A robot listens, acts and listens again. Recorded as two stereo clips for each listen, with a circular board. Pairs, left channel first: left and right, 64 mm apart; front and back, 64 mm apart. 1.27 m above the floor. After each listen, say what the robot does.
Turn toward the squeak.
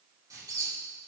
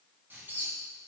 Turn 120° right.
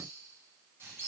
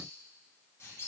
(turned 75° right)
Turn 45° right.
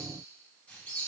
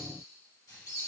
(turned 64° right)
Turn 20° left.
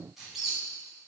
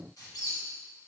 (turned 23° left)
Found it: a squeak, straight ahead.